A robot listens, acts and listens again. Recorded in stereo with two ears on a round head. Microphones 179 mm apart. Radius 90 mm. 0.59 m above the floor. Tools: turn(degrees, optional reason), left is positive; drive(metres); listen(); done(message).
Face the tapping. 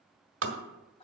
turn(degrees=-65, reason="The tapping: about 65° right or 115° right.")
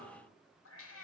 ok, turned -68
done("Found it: tapping, straight ahead, 1 to 2 m away.")